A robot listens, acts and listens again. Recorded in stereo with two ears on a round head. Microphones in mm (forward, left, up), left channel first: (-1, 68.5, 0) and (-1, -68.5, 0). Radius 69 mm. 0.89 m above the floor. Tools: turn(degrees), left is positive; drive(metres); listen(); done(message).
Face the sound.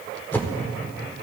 turn(degrees=30)
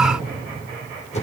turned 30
turn(degrees=135)
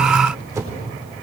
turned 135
turn(degrees=-20)
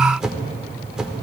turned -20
done("Found it: a whoosh, straight ahead, 1 to 2 m away.")